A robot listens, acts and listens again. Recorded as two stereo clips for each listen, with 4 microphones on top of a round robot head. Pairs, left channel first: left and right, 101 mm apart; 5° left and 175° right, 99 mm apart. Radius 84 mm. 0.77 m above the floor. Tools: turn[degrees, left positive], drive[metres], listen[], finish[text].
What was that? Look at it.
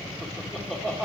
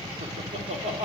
Thought: The laughter: 170° right.
Action: turn[-170]
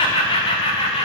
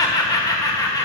Thought: The laughter is now 60° left.
Action: turn[60]
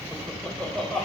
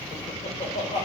Thought: The laughter is now 10° left.
Action: turn[10]
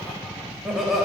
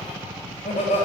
Action: finish[Found it: laughter, straight ahead, 2 to 4 m away.]